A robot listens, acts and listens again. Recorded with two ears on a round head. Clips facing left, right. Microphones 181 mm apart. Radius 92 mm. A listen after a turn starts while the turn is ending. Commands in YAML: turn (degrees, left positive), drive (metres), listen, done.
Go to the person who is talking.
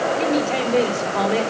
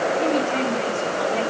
turn: 65
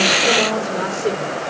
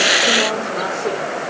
listen: true
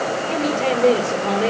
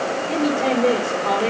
drive: 1.0
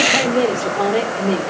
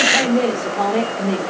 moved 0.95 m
turn: 10
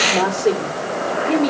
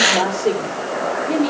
drive: 1.0
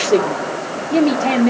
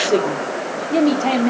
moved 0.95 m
drive: 1.0
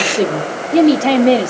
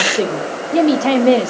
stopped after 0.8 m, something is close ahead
done: "I am next to the woman speaking."